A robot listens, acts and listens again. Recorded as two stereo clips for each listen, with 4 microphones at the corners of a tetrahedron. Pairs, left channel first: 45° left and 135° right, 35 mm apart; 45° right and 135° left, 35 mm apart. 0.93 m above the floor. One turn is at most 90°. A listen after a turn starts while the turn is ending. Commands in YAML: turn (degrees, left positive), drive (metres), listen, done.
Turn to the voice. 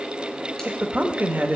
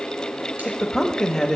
turn: -90
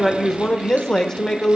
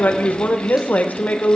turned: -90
turn: -25
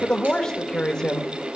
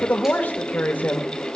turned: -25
turn: -20
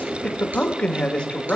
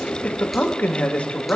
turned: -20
turn: -10
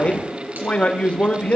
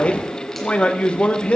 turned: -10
done: "Found it: a man speaking, straight ahead."